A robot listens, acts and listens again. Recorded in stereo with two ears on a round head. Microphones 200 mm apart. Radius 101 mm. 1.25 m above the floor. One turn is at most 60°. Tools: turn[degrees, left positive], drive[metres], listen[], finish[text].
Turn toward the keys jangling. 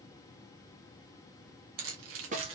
Thought: The keys jangling: about 60° right or 120° right.
Action: turn[-60]
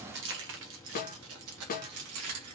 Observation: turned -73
Thought: So it is at 80° right.
Action: turn[-60]
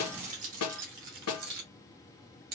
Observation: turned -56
Thought: The keys jangling is now 40° right.
Action: turn[-40]
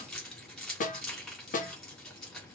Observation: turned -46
Action: finish[Facing the keys jangling, 2 to 4 m away.]